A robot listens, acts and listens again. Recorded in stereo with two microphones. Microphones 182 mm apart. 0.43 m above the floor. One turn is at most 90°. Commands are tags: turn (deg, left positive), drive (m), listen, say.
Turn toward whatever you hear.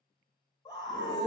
<turn deg="25"/>
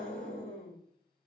<turn deg="90"/>
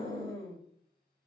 <turn deg="30"/>
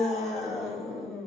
<say>Found it: a scream, straight ahead, 1 to 2 m away.</say>